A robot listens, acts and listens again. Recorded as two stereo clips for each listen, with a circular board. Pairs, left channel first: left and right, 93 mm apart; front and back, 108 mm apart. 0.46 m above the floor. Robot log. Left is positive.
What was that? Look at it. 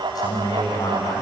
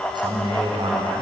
note: The man speaking: 140° left.
cmd yaw +140
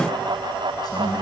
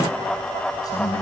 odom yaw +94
note: The man speaking is now 55° left.
cmd yaw +55
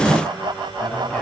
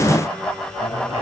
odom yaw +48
note: The man speaking is now 10° left.
cmd yaw +10
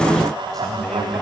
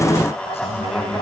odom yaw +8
note: The man speaking is now 10° left.
cmd yaw +10
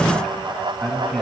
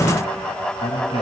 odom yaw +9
end: Found it: a man speaking, straight ahead, 2 to 4 m away.